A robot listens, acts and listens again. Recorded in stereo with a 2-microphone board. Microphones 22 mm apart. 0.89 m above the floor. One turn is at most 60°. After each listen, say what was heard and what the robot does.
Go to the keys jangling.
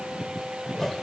Keep listening.
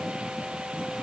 Keep listening.
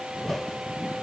I can't make out keys jangling, only a whoosh.